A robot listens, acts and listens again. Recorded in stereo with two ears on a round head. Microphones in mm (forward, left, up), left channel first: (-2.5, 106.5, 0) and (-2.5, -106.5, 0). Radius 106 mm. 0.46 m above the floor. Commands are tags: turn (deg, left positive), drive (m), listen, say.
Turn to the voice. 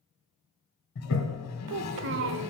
<turn deg="-55"/>
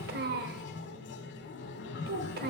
<turn deg="-50"/>
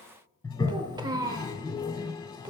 <turn deg="-20"/>
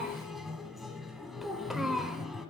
<say>Facing the child speaking.</say>